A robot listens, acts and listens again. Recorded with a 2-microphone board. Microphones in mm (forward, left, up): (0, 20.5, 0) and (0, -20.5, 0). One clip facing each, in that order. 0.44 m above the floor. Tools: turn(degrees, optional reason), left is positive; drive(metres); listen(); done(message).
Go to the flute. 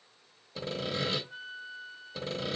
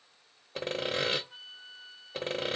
turn(degrees=-60, reason="The flute: about 60° right or 120° right.")
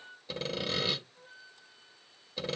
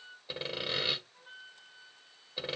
turn(degrees=-60, reason="So it is at 60° right.")
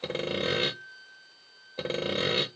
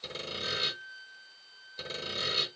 turn(degrees=15, reason="The flute is now 15° left.")
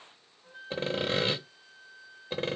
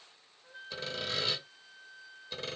turn(degrees=10, reason="The flute is now 10° left.")
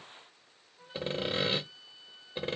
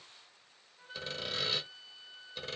drive(metres=1.0)
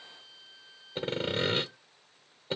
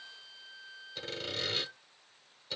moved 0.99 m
turn(degrees=-10, reason="The flute is now 10° right.")
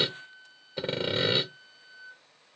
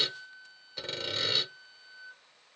drive(metres=1.0)
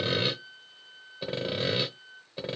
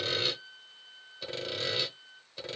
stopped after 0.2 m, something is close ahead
turn(degrees=10, reason="The flute is now 10° left.")
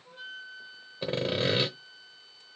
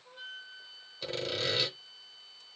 done("Arrived at the flute, straight ahead.")